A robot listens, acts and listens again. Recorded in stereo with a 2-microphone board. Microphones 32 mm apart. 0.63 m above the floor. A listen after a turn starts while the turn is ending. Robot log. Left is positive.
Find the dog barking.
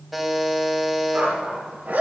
note: The dog barking: about 60° right or 120° right.
cmd yaw -60
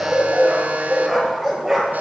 note: So it is at 15° right.
cmd yaw -15
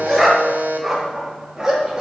note: The dog barking is now 20° right.
cmd yaw -20
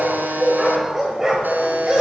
note: The dog barking is now 20° right.
cmd yaw -20
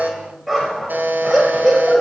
end: Found it: a dog barking, straight ahead, over 4 m away.